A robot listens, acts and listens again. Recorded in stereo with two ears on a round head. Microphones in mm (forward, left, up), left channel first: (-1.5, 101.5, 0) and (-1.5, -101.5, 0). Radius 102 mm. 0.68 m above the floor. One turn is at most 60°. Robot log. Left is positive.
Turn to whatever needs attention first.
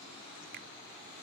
cmd idle
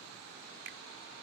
cmd idle
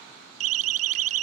note: The siren: about 70° right or 110° right.
cmd yaw -60
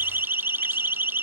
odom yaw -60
note: So it is at 10° right.
cmd yaw -10
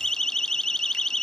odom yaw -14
end: Facing the siren.